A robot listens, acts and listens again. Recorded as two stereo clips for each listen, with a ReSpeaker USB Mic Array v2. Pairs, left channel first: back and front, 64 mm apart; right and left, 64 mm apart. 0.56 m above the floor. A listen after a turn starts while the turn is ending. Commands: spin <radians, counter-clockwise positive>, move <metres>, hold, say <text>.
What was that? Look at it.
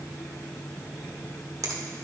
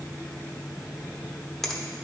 say Facing the finger snap, 1 to 2 m away.